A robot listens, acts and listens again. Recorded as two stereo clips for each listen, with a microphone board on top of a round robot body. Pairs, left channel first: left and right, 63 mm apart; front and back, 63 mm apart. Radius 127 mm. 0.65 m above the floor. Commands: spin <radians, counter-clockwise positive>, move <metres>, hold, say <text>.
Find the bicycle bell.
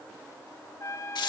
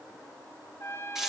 hold
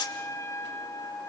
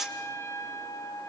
hold
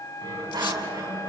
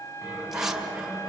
spin -1.75
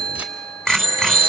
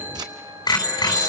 say Found it: a bicycle bell, straight ahead, over 4 m away.